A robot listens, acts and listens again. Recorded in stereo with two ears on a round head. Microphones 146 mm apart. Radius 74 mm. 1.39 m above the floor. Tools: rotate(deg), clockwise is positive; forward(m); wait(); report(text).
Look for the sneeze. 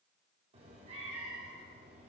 wait()
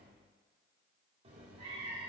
wait()
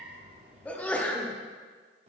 rotate(-30)
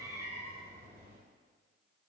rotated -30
wait()
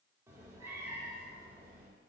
report("I heard a sneeze, but can't make it out now. It was about 20° right or 140° left.")